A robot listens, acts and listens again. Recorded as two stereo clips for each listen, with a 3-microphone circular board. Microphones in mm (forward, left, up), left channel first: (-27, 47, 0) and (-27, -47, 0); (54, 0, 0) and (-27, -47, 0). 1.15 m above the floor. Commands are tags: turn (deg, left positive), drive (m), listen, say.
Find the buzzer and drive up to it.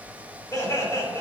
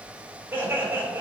<listen/>
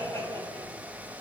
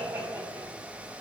<listen/>
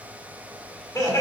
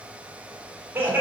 <say>I can't make out a buzzer, only laughter.</say>